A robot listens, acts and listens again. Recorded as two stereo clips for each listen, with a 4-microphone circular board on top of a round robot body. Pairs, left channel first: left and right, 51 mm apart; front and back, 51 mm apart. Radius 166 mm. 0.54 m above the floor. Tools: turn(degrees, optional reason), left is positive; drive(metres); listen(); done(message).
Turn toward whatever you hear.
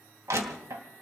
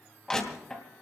turn(degrees=-80, reason="The crushing: 80° right.")
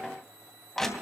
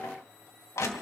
turn(degrees=10, reason="The crushing is now 10° left.")
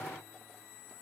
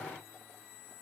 listen()
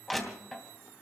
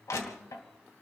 done("Facing the crushing.")